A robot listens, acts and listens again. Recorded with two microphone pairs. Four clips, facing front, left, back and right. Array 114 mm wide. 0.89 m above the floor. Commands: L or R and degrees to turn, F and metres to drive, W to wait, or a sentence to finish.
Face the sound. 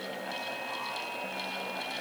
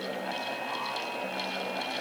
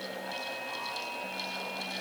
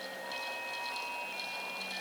W
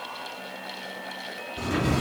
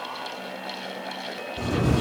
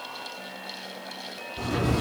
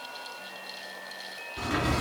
R60
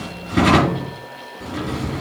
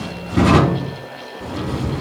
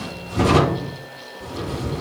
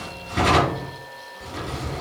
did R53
Found it: a drawer, straight ahead, 2 to 4 m away.